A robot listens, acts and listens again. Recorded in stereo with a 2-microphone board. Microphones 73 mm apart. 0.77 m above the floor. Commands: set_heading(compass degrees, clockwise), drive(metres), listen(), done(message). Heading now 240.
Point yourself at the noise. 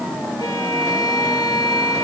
set_heading(165)
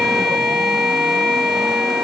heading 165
done("Found it: a violin, straight ahead.")